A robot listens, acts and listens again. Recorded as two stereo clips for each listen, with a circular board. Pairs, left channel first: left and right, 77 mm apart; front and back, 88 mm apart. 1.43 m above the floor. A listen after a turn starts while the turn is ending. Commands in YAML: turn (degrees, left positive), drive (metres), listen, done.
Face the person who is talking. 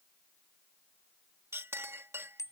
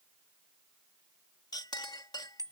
listen: true
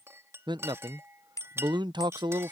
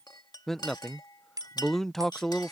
turn: -85
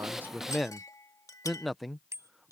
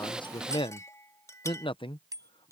done: "Facing the man speaking."